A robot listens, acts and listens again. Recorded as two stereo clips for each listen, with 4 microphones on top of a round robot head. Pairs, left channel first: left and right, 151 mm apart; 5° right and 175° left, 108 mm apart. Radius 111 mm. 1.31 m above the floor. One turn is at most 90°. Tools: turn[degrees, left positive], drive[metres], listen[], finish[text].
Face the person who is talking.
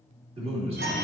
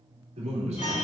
Thought: The man speaking: 140° right.
Action: turn[-90]
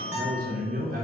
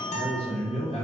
Thought: The man speaking is now 50° right.
Action: turn[-50]
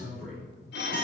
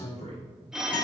Action: finish[Found it: a man speaking, straight ahead, 2 to 4 m away.]